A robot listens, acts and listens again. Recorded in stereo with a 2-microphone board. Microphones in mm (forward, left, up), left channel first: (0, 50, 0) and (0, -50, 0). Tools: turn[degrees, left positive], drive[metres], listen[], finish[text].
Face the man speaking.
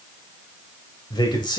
Thought: The man speaking: about 45° left or 135° left.
Action: turn[45]
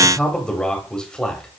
Thought: So it is at 10° left.
Action: turn[10]
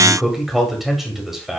Action: finish[Facing the man speaking.]